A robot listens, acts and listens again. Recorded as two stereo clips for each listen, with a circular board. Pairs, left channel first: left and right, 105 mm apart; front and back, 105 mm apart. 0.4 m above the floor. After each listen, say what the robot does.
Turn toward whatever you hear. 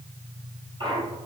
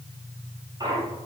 Turn 125° right.
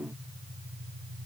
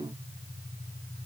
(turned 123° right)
Facing where the clunk came from. I can't hear it now.